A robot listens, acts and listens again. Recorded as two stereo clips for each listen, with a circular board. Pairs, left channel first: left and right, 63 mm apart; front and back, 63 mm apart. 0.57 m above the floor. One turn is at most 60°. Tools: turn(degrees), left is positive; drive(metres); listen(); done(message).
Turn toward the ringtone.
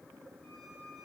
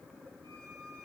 listen()
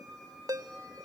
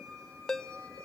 turn(degrees=-60)
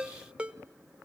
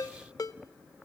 turn(degrees=-15)
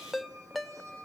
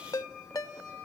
done("Found it: a ringtone, straight ahead, under 1 m away.")